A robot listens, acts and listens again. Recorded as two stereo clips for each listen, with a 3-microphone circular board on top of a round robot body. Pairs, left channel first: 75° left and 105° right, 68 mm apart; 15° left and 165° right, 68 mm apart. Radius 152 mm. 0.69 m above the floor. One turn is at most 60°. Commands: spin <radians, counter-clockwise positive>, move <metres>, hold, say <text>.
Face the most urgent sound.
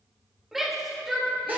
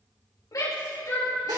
spin -0.35
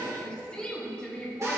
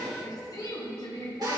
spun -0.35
say Facing the shout.